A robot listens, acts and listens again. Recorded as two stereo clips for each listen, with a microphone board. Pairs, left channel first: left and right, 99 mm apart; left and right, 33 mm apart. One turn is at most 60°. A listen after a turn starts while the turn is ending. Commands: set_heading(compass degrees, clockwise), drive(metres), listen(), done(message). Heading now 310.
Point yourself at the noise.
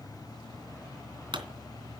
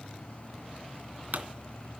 set_heading(10)
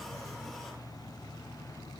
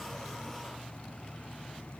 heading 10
listen()
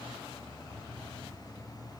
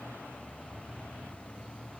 done("I heard a pop, but can't make it out now. It was about straight ahead or 60° right.")